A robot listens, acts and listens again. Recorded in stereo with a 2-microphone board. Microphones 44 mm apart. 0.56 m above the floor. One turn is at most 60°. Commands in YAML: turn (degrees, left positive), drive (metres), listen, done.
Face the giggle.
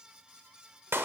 listen: true
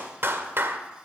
listen: true
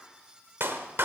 done: "I can't make out a giggle, only a clap."